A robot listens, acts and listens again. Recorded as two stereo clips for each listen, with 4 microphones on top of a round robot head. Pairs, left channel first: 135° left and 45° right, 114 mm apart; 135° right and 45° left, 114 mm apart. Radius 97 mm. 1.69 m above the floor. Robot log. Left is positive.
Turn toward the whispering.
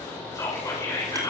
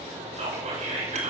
note: The whispering: 75° left.
cmd yaw +75
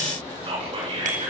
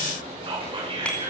end: Found it: whispering, straight ahead, over 4 m away.